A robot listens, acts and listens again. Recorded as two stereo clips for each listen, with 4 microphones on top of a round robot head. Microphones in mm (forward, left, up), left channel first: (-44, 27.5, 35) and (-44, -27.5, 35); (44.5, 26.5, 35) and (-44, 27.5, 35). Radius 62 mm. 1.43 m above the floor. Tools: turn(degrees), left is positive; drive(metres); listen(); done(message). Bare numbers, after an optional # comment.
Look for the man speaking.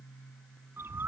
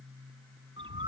listen()
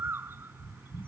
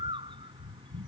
listen()
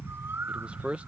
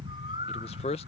# The man speaking: 15° right.
turn(-15)
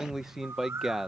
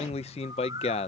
done("Found it: a man speaking, straight ahead.")